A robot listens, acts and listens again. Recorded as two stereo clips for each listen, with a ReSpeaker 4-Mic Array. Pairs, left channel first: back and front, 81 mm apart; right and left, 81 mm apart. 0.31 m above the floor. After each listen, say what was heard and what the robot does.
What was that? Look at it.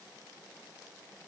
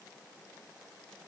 Keep listening.
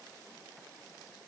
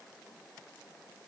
Keep listening.
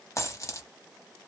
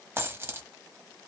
The dropped coin: 145° left. Turn 145° left.
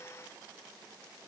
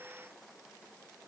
Facing where the dropped coin came from. I can't hear it now.